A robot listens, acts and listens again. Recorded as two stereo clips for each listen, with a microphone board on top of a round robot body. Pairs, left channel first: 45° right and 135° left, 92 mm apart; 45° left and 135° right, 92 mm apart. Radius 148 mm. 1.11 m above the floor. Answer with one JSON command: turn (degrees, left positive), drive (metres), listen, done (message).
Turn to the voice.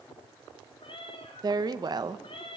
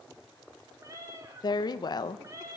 {"turn": 90}
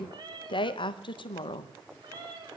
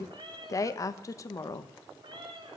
{"turn": -10}
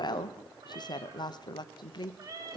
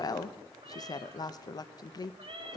{"done": "Found it: a woman speaking, straight ahead, 1 to 2 m away."}